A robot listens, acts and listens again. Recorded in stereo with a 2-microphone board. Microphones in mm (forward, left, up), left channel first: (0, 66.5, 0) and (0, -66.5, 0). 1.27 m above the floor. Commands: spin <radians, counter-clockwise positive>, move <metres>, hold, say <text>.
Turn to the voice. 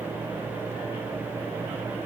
hold
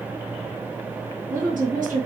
spin -1.57
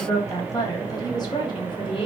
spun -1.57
spin 0.70
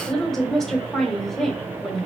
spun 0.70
say Found it: a woman speaking, straight ahead.